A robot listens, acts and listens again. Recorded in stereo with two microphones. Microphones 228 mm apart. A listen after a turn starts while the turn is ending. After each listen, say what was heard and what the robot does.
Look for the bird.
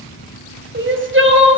Keep listening.
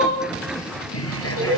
Turn 90° left.
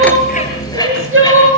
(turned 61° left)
So it is at 15° left. Turn 15° left.
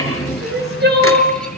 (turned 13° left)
Facing the bird, over 4 m away.